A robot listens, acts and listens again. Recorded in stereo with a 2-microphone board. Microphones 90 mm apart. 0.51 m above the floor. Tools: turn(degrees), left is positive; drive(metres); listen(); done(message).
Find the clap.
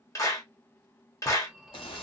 turn(degrees=35)
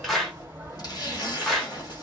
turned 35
done("Found it: a clap, straight ahead, 1 to 2 m away.")